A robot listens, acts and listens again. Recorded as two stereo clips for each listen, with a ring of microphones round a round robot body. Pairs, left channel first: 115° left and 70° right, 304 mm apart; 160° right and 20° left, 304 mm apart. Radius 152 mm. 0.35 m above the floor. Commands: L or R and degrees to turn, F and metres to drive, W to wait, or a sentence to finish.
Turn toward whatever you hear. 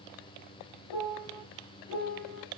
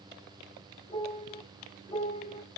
L135
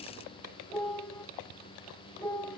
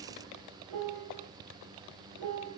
L30
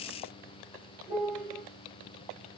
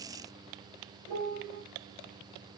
Facing the piano.